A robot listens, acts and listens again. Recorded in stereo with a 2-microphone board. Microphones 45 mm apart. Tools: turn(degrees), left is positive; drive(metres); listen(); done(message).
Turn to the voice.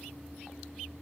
listen()
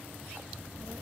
turn(degrees=-65)
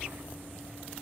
turn(degrees=-40)
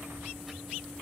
turn(degrees=-10)
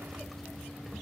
done("Found it: a child speaking, straight ahead.")